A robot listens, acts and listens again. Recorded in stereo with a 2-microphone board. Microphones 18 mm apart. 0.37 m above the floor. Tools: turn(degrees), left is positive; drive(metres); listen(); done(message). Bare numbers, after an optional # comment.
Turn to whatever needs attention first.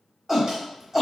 turn(-30)
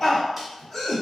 # So it is at 25° left.
turn(25)
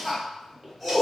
done("Found it: a shout, straight ahead.")